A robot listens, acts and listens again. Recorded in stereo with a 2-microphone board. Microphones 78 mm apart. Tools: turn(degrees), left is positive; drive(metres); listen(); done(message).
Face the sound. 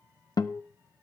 turn(degrees=55)
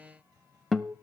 done("Found it: a guitar, straight ahead, under 1 m away.")